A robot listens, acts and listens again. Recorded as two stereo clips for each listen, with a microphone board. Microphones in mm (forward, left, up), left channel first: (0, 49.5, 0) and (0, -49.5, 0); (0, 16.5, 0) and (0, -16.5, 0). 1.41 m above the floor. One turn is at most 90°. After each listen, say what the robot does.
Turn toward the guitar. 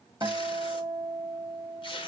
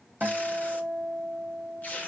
Turn 40° right.
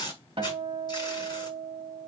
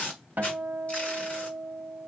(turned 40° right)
Turn 90° right.
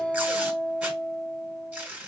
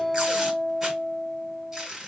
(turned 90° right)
Turn 20° right.
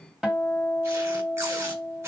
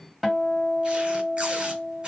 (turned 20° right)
Found it: a guitar, straight ahead.